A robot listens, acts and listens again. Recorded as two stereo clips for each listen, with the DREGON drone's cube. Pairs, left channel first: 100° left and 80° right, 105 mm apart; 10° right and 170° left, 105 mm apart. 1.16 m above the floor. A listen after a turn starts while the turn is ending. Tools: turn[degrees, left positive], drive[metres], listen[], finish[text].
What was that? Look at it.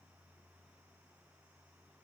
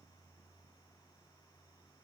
Action: listen[]
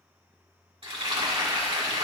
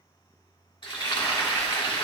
Thought: The frying: 50° right.
Action: turn[-50]
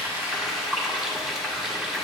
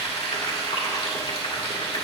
Action: finish[Facing the frying, 1 to 2 m away.]